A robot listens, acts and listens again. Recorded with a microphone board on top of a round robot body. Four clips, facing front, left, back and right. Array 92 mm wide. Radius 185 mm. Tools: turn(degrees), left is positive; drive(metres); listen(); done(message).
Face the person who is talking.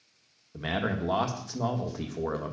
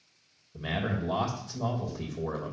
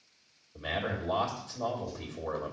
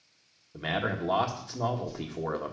turn(degrees=-50)
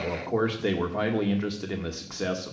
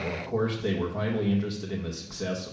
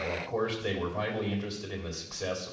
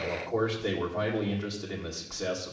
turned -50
done("Found it: a man speaking, straight ahead.")